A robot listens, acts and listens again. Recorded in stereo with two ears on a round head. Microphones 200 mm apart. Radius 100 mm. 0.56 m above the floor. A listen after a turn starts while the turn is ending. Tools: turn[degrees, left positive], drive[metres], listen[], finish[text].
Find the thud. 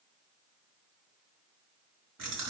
Action: listen[]
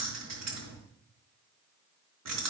Action: listen[]
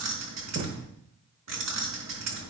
Thought: The thud: about 60° right or 120° right.
Action: turn[-60]
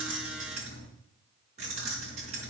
Action: listen[]
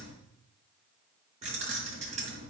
Action: finish[I heard a thud, but can't make it out now. It was about straight ahead or 60° right.]